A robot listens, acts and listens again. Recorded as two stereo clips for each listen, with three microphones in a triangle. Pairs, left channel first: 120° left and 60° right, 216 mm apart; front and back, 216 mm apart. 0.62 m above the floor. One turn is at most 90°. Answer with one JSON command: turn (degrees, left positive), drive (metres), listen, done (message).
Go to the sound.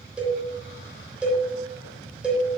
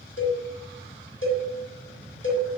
{"turn": 25}
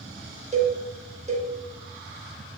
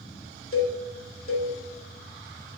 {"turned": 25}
{"drive": 1.0}
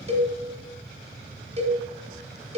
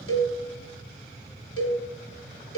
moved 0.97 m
{"drive": 1.0}
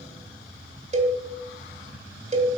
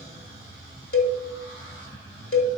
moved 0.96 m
{"drive": 1.0}
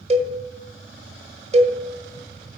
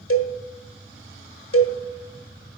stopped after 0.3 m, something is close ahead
{"done": "Arrived at the cowbell, straight ahead."}